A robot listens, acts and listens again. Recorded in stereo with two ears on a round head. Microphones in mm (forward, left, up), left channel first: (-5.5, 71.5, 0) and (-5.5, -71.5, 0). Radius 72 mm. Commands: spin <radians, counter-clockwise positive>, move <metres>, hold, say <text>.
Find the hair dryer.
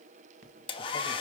spin 0.52
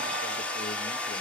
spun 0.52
spin 0.17
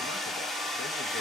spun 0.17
say Facing the hair dryer, 1 to 2 m away.